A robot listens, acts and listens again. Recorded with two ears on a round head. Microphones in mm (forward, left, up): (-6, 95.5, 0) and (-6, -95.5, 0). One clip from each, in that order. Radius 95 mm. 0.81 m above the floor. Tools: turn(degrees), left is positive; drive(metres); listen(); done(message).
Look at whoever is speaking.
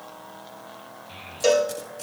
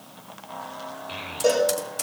turn(degrees=-35)
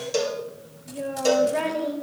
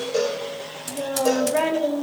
done("Found it: a child speaking, straight ahead, 1 to 2 m away.")